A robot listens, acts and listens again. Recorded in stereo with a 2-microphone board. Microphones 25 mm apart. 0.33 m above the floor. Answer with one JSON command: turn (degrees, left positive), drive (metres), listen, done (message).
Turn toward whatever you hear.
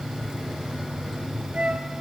{"turn": -50}
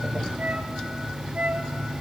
{"turn": -80}
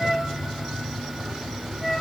{"turn": 10}
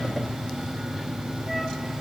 {"listen": true}
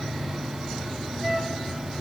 {"done": "Facing the flute, 1 to 2 m away."}